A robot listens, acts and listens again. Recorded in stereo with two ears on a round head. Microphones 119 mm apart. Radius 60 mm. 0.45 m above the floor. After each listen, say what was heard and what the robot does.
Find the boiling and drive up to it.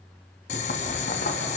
The boiling: about 60° left or 120° left. Turn 60° left.
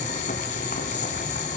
So it is at 60° left. Turn 60° left.
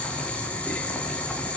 The boiling is now 10° left. Turn 10° left.
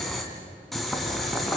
Drive 1.0 m forward.
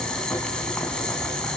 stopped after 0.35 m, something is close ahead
Something is in my way. I am facing the boiling but have not reached it.